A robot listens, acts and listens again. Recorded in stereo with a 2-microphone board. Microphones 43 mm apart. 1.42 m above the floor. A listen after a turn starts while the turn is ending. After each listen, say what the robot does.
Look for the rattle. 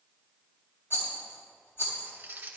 Turn 65° left.
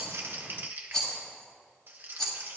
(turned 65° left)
Turn 10° left.
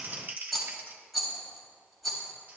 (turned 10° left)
Found it: a rattle, straight ahead.